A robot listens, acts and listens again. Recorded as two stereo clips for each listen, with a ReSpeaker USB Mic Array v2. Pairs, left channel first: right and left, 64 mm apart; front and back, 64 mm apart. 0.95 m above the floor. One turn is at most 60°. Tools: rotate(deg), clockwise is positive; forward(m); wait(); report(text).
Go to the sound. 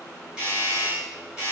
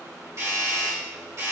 rotate(-60)
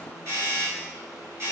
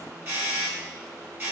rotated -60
rotate(-60)
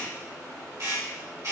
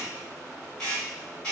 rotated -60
rotate(-60)
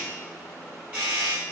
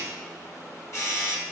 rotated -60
rotate(-25)
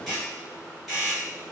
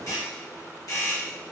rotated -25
forward(1.0)
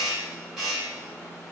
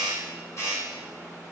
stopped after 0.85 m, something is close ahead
rotate(-10)
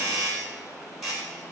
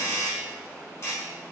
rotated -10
report("Arrived at the doorbell, straight ahead.")